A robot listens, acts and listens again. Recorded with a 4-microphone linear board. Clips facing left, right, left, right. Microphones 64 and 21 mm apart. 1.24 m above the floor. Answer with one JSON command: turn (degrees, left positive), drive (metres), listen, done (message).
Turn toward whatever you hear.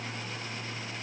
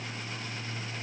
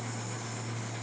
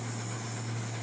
{"listen": true}
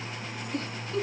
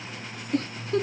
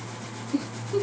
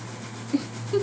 {"turn": -55}
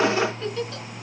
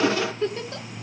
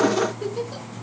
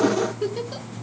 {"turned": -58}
{"turn": -40}
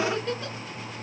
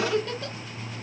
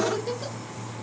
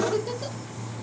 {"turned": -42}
{"done": "Facing the giggle, under 1 m away."}